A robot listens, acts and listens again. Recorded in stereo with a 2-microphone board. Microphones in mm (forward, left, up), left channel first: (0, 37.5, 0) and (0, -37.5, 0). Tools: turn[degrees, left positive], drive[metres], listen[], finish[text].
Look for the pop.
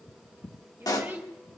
Thought: The pop: about 55° left or 125° left.
Action: turn[55]
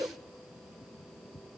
Action: listen[]
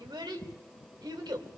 Action: finish[I heard a pop, but can't make it out now. It was about straight ahead or 70° left.]